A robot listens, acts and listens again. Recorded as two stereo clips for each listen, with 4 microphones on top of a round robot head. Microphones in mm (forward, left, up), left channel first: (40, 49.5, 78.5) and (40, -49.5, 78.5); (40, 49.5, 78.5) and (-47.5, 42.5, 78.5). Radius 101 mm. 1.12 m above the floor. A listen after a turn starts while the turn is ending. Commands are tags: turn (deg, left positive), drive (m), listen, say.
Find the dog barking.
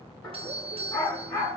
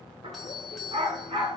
<turn deg="155"/>
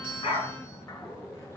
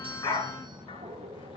<listen/>
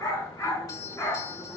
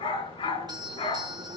<turn deg="25"/>
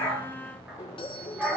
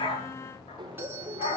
<say>Found it: a dog barking, straight ahead.</say>